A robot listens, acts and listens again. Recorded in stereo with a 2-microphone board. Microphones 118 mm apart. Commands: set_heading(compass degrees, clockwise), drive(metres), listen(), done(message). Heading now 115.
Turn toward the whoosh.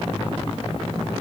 listen()
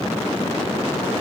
listen()
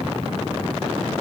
done("I can't make out a whoosh.")